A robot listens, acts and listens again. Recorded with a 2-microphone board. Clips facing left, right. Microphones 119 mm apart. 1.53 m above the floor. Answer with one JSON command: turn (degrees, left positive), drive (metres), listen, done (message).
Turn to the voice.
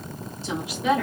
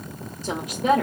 {"turn": -45}
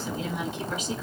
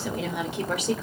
{"turn": -90}
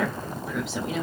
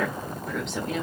{"done": "Facing the woman speaking."}